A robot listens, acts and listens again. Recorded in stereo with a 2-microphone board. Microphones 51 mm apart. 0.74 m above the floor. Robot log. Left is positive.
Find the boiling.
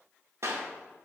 cmd idle
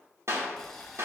cmd yaw +30
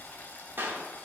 note: So it is at 140° left.
cmd yaw +140
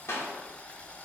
note: The boiling is now 25° left.
cmd yaw +25
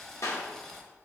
note: The boiling is now 10° left.
cmd yaw +10
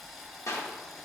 end: Found it: boiling, straight ahead, 1 to 2 m away.